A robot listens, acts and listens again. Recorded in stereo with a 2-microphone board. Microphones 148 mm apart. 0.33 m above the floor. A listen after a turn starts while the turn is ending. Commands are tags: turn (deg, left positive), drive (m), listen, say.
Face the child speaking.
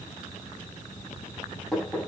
<listen/>
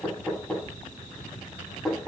<listen/>
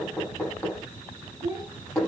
<turn deg="-30"/>
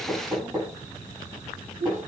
<turn deg="-120"/>
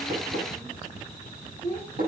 <turn deg="-45"/>
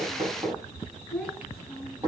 <say>Facing the child speaking, over 4 m away.</say>